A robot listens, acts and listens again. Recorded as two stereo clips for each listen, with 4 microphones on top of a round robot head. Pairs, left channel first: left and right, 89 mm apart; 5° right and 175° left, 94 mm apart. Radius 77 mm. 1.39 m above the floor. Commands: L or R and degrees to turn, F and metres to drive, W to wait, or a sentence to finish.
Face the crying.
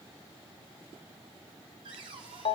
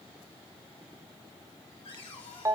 W
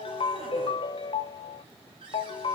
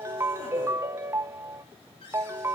W
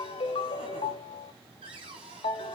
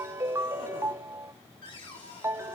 I can't make out crying, only a ringtone and a cupboard door.